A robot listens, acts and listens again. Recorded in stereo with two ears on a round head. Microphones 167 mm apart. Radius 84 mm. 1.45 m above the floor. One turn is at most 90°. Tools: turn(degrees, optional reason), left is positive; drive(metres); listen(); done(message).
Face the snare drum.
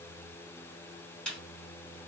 turn(degrees=30)
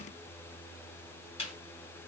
turn(degrees=90, reason="So it is at 145° left.")
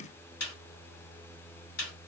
turn(degrees=65, reason="The snare drum is now 65° left.")
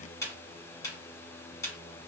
turn(degrees=20, reason="The snare drum is now 20° left.")
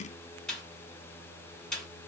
done("Found it: a snare drum, straight ahead.")